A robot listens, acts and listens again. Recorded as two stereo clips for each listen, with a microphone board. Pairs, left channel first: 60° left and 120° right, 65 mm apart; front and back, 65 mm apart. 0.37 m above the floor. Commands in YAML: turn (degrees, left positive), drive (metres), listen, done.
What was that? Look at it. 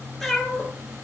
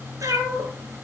turn: 145
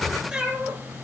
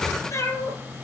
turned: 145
turn: -45
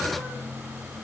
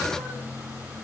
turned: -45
listen: true
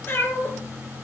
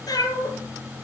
done: "Facing the cat meowing, 2 to 4 m away."